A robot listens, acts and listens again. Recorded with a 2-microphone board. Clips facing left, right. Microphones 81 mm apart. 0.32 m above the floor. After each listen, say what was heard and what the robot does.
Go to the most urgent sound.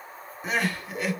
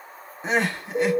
The crying: about 25° right or 155° right. Turn 25° right.
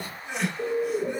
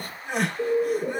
So it is at 125° right. Turn 125° right.
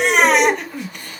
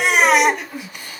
Drive 1.0 m forward.
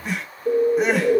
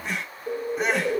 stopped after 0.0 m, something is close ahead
Something is in my way. I am facing the crying but have not reached it.